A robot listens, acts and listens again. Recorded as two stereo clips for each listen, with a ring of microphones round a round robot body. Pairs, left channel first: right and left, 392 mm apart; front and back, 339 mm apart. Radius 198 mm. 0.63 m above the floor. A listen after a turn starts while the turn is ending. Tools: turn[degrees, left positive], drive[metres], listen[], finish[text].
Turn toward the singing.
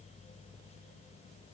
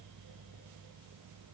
Action: listen[]
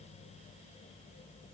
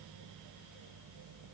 Action: listen[]
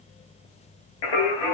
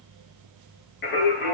Thought: The singing: 65° right.
Action: turn[-65]
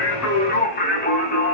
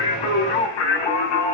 Thought: The singing is now 20° right.
Action: turn[-20]
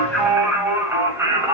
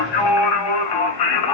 Action: finish[Found it: singing, straight ahead.]